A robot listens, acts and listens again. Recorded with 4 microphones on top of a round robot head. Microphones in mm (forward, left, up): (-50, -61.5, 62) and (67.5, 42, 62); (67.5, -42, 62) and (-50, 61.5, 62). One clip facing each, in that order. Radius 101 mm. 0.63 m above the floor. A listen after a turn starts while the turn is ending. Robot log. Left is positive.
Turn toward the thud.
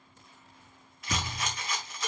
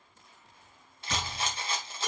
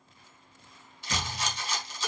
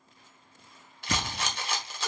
note: The thud: 140° left.
cmd yaw +140
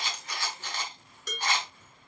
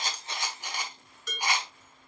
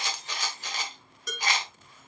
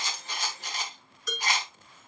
end: Facing where the thud came from. I can't hear it now.